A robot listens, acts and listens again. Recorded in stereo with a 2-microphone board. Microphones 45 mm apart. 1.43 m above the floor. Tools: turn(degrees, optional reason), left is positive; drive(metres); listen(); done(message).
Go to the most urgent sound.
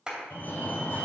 turn(degrees=60, reason="The fire alarm: about 60° left or 120° left.")
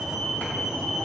drive(metres=1.0)
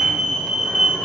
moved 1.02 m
drive(metres=1.0)
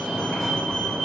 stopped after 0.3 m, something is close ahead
turn(degrees=10, reason="The fire alarm is now 10° left.")
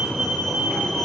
done("Arrived at the fire alarm, straight ahead.")